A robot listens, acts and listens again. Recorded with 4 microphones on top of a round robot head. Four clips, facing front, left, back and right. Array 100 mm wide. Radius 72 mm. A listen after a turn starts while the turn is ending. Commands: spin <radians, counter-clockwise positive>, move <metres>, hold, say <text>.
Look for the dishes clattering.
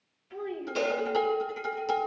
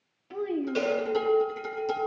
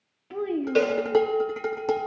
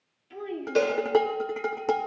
spin -2.18
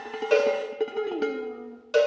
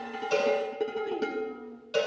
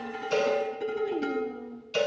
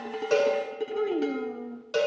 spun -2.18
spin 0.35
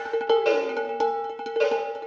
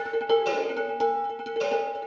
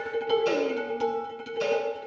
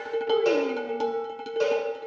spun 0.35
say Facing the dishes clattering.